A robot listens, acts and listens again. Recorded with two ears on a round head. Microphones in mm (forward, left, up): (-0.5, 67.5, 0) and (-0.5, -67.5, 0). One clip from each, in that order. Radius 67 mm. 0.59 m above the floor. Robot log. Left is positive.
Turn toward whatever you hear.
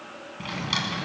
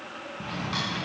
note: The drawer: about 70° left or 110° left.
cmd yaw +70
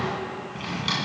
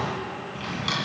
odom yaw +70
end: Facing the drawer.